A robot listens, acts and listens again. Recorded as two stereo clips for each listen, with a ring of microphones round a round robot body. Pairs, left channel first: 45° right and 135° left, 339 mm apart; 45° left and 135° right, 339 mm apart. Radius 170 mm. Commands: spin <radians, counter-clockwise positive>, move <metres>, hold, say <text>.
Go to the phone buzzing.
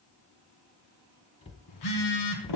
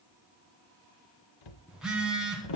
spin -0.87
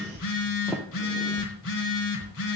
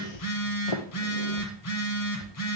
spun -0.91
move 1.0
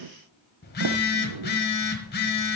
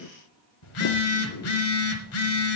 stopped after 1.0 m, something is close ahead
spin 0.17
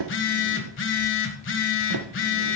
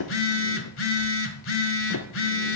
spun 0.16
say I am next to the phone buzzing.